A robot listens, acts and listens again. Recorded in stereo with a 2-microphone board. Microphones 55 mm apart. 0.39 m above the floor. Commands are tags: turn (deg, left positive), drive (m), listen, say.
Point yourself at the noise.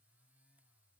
<listen/>
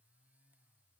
<listen/>
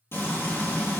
<turn deg="45"/>
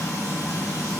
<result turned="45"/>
<turn deg="85"/>
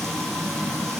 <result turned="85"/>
<say>Facing the frying, 2 to 4 m away.</say>